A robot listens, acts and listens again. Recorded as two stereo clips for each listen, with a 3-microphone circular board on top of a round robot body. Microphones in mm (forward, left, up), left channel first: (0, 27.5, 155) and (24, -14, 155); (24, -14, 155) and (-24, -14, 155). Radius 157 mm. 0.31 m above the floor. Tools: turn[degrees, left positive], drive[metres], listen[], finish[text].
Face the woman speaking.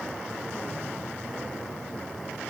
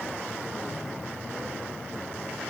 Action: listen[]
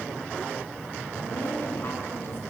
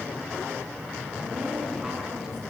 Thought: The woman speaking: 100° left.
Action: turn[100]
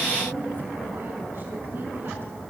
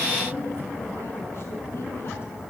Thought: The woman speaking is now 20° right.
Action: turn[-20]
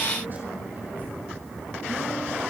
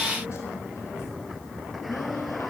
Action: listen[]
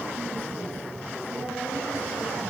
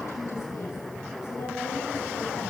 Thought: The woman speaking is now 10° right.
Action: turn[-10]
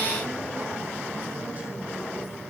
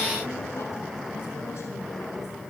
Action: listen[]
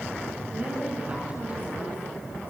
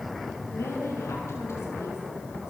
Action: finish[Found it: a woman speaking, straight ahead.]